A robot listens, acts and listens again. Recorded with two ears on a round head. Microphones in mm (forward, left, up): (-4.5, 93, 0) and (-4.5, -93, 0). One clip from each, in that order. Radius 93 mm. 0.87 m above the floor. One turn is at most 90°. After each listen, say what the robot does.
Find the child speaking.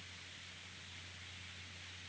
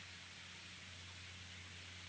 Keep listening.
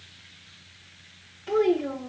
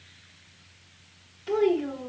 Turn 30° right.
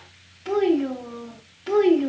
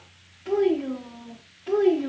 Turn 55° left.
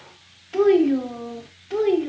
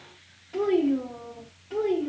Turn 45° left.
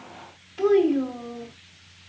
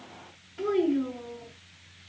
Turn 20° left.
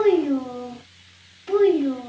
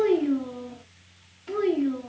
Turn 10° left.
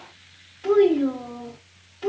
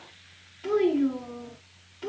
Found it: a child speaking, straight ahead.